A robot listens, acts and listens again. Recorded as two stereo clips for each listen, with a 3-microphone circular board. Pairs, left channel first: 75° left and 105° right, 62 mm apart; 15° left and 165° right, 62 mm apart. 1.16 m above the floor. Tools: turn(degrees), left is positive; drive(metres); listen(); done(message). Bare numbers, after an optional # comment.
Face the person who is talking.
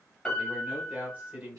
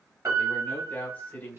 # The man speaking: 45° right.
turn(-45)
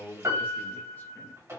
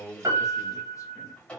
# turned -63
# The man speaking is now 20° left.
turn(20)
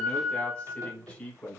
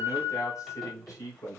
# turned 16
done("Facing the man speaking.")